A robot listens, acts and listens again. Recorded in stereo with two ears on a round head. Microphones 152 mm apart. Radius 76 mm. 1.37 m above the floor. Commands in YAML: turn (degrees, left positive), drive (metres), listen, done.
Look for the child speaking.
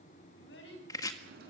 turn: 75
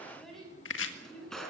done: "Found it: a child speaking, straight ahead."